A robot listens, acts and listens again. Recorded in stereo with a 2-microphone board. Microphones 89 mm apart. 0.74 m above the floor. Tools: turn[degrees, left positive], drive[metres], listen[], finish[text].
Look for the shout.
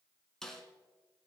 Action: listen[]
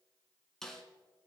Action: listen[]
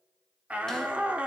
Action: turn[-30]
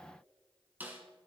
Action: listen[]
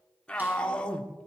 Thought: So it is at 10° left.
Action: turn[10]
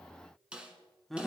Action: finish[Found it: a shout, straight ahead.]